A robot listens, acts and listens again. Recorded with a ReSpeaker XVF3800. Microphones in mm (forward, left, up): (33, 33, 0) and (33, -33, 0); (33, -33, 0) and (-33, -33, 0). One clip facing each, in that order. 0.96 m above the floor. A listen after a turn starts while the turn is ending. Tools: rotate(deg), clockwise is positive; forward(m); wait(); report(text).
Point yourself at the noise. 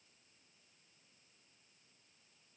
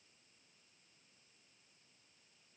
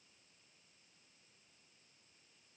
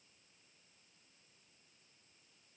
wait()
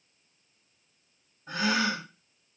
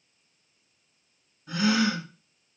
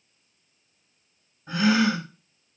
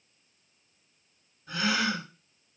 rotate(-50)
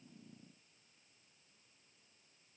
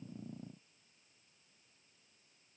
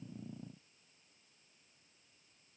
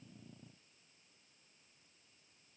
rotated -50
report("Facing where the gasp came from. I can't hear it now.")